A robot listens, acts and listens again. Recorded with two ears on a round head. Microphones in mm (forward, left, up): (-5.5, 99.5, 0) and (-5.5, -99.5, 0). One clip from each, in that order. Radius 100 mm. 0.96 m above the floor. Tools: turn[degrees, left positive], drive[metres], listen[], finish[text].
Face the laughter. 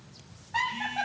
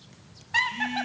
Action: turn[-90]
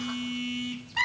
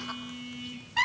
Action: finish[Found it: laughter, straight ahead.]